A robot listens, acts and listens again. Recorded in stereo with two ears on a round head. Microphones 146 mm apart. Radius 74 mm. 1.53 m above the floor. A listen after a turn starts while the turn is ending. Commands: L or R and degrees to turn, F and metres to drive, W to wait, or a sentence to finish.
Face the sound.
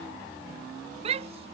R40
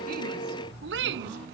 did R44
R95
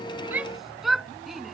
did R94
Found it: a shout, straight ahead.